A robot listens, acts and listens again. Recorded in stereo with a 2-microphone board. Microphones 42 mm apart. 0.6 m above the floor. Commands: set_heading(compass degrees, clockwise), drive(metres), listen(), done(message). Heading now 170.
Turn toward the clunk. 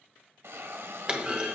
set_heading(195)
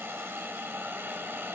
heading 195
listen()
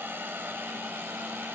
done("I heard a clunk, but can't make it out now. It was about straight ahead or 130° right.")